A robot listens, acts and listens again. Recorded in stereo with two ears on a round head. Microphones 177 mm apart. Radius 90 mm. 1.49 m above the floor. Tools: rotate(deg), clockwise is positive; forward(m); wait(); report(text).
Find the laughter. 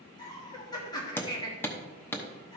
rotate(-20)
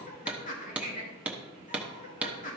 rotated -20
rotate(-140)
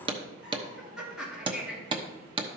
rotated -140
report("Facing the laughter.")